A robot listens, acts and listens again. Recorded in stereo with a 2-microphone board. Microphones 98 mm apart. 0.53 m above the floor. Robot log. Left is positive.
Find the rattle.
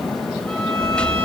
cmd yaw +30
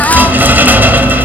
note: So it is at 20° right.
cmd yaw -20
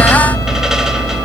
end: Found it: a rattle, straight ahead, 1 to 2 m away.